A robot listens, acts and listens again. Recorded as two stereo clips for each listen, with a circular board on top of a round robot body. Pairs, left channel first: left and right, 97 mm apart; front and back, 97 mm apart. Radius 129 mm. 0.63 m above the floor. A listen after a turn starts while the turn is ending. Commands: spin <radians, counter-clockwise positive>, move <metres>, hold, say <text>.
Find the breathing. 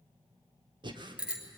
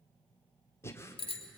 spin -1.05
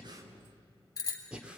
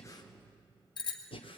spin -0.17
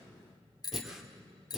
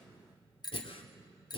say Facing the breathing, 2 to 4 m away.